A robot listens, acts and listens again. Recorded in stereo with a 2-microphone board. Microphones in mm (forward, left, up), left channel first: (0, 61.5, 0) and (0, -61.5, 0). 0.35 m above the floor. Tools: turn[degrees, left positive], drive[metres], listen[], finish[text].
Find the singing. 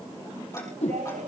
Action: turn[-90]
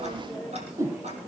Action: listen[]
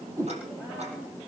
Action: listen[]
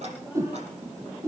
Action: finish[I heard singing from this way, but can't make it out now.]